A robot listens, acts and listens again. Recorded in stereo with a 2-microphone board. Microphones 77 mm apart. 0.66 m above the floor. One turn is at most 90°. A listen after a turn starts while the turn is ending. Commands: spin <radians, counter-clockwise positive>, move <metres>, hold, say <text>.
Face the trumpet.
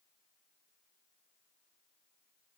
hold
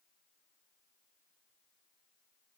hold
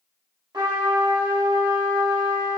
spin -1.13
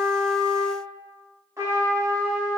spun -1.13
spin -0.70
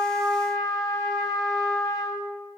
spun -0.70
say Found it: a trumpet, straight ahead, 1 to 2 m away.